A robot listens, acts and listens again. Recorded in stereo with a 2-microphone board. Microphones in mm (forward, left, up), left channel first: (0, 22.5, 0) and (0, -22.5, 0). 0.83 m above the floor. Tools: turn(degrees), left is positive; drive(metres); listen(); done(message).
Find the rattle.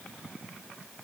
listen()
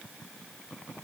listen()
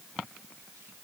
done("I can't make out a rattle.")